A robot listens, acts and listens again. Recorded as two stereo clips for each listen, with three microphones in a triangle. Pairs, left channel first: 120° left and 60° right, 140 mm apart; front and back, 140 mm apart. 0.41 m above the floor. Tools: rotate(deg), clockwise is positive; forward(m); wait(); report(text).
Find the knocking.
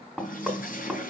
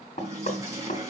rotate(-30)
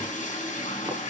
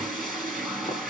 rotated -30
wait()
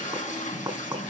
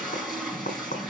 report("Found it: knocking, straight ahead, 2 to 4 m away.")